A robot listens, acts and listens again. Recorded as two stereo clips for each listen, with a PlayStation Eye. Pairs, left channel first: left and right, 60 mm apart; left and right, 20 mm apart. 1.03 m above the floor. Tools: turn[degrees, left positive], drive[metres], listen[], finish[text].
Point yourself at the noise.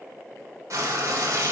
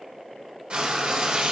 Thought: The frying: about 60° right or 120° right.
Action: turn[-60]
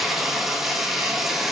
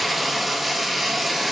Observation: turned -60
Action: finish[Found it: frying, straight ahead, 1 to 2 m away.]